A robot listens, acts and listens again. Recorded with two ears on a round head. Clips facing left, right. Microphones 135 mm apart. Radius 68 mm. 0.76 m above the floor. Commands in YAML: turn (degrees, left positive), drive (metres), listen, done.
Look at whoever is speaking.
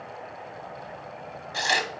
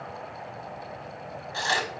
listen: true
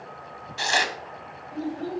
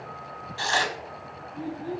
turn: 90
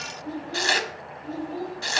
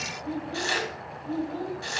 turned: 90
turn: 10
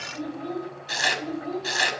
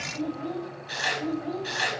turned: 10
done: "Found it: a child speaking, straight ahead."